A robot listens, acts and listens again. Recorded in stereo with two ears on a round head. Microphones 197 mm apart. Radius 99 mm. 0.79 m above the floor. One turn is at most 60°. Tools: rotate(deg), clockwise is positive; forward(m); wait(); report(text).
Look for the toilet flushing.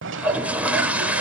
rotate(30)
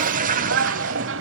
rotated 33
rotate(60)
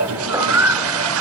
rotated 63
rotate(60)
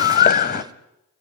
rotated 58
rotate(20)
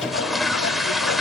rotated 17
report("Facing the toilet flushing.")